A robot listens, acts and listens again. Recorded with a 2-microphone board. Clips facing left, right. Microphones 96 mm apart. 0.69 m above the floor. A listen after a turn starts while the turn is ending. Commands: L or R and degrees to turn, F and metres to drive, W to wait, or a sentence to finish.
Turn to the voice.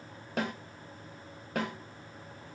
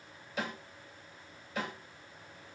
W
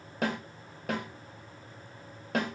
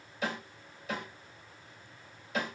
W
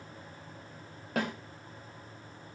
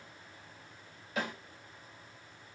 I can't make out anyone speaking to turn to.